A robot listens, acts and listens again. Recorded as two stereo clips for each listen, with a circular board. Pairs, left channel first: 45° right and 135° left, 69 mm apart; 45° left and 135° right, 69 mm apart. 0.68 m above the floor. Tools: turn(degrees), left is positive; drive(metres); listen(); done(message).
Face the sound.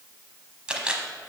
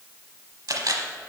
turn(degrees=-150)
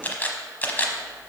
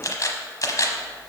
turn(degrees=15)
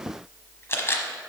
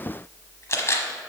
done("Facing the camera shutter.")